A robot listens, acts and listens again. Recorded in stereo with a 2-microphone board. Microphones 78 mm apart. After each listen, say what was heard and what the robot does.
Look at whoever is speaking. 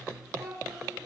The child speaking: about 50° right or 130° right. Turn 50° right.
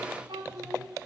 So it is at 75° right. Turn 75° right.
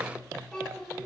The child speaking is now 10° left. Turn 10° left.
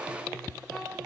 Keep listening.
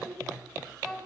Facing the child speaking.